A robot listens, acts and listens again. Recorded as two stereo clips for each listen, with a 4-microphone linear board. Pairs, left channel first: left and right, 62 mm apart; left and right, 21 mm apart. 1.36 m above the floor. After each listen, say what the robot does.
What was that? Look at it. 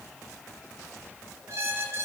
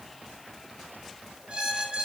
Turn 50° right.
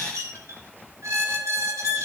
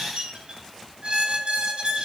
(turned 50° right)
Turn 70° right.
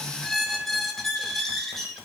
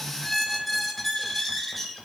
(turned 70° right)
Found it: a squeak, straight ahead.